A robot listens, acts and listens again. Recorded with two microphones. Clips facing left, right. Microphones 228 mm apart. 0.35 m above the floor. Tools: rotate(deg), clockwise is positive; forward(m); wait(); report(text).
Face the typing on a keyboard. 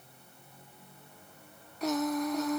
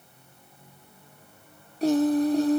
wait()
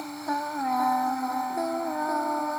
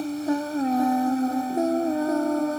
wait()
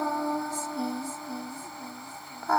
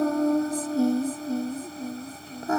report("I can't make out typing on a keyboard, only singing.")